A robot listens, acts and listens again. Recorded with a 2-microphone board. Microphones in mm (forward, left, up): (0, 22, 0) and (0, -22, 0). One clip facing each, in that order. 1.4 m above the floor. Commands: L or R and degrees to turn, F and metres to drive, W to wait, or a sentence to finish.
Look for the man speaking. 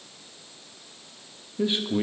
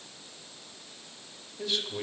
L20
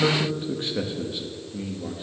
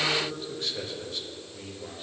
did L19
L30
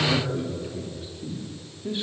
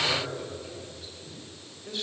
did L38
L20
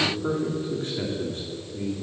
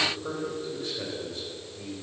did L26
L140
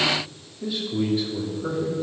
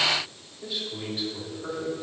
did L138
Facing the man speaking.